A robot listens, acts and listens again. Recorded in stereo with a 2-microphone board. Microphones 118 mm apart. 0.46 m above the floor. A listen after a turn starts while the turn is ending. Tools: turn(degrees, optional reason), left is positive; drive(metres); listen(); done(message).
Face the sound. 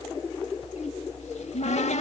turn(degrees=70, reason="The cupboard door: about 70° left or 110° left.")
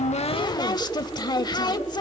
turn(degrees=35, reason="So it is at 35° left.")
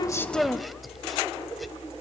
done("Facing the cupboard door.")